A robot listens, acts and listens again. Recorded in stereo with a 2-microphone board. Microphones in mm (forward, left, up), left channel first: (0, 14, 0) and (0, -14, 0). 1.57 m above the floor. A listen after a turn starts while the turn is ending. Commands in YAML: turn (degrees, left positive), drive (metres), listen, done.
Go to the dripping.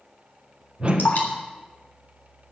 turn: 75
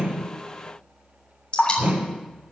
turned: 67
turn: 35
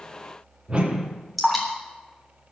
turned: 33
drive: 1.0
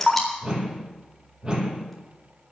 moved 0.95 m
drive: 1.0
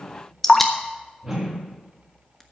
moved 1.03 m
turn: 15
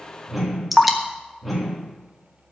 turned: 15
drive: 1.0
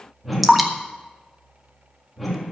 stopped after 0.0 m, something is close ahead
done: "Arrived at the dripping, straight ahead."